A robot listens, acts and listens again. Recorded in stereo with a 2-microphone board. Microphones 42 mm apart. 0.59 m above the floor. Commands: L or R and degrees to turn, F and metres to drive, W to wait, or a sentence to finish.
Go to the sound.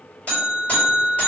L30
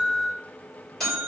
F1.0
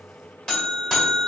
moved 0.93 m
L10
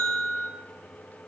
F1.0
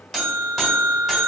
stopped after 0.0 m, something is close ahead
I am next to the buzzer.